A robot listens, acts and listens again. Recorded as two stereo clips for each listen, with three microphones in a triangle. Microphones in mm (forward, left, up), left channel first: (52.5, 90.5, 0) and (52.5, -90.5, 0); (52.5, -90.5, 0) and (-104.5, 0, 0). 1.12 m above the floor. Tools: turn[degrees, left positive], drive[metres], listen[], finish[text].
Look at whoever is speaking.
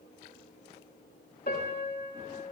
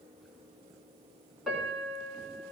Action: listen[]
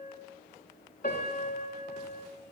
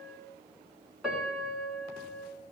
Action: listen[]
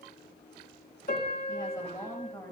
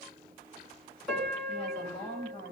Thought: The woman speaking: 20° left.
Action: turn[20]
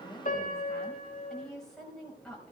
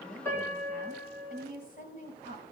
Action: finish[Facing the woman speaking, over 4 m away.]